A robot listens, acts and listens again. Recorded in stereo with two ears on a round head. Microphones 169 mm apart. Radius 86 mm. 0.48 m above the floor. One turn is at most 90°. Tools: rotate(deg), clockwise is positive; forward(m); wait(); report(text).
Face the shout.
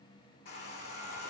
wait()
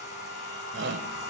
rotate(65)
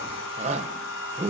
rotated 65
rotate(40)
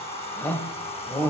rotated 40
rotate(-10)
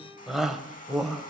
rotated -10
report("Found it: a shout, straight ahead.")